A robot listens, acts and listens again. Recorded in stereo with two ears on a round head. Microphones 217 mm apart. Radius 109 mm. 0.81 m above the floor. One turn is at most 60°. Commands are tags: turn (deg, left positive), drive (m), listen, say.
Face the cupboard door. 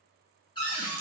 <turn deg="20"/>
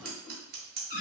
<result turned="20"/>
<turn deg="60"/>
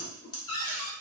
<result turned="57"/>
<turn deg="60"/>
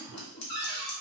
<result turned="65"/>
<turn deg="20"/>
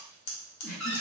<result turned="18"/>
<say>Facing the cupboard door, 1 to 2 m away.</say>